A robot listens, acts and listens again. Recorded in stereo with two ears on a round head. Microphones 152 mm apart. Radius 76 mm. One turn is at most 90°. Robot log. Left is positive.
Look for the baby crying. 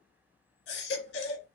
cmd yaw +90
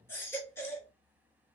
note: So it is at 15° left.
cmd yaw +15
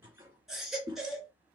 end: Facing the baby crying, 1 to 2 m away.